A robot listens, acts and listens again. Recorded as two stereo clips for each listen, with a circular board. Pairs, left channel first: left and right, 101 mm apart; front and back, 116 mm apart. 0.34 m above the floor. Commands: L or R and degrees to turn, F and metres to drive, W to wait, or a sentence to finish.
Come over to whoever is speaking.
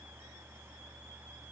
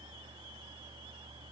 W
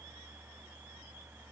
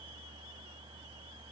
W
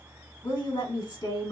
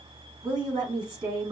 L130
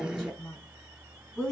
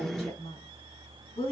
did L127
F1.0
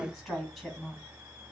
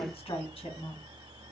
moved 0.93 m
F1.0
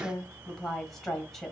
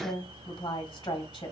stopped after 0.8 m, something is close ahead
I am next to the woman speaking.